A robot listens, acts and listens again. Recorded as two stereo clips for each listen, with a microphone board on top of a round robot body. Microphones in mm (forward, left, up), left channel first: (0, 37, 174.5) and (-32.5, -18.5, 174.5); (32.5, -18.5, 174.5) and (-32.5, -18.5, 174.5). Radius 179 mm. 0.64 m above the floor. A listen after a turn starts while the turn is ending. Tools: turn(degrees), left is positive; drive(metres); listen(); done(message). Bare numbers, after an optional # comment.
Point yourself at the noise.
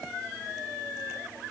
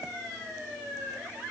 listen()
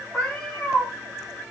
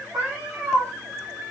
# The cat meowing: 145° left.
turn(145)
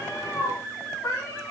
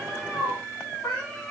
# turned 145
# The cat meowing is now 40° left.
turn(40)
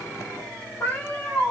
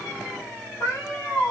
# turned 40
# The cat meowing is now 25° left.
turn(25)
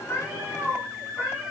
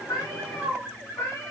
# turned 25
# The cat meowing is now 20° right.
turn(-20)
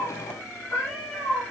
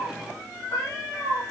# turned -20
done("Facing the cat meowing.")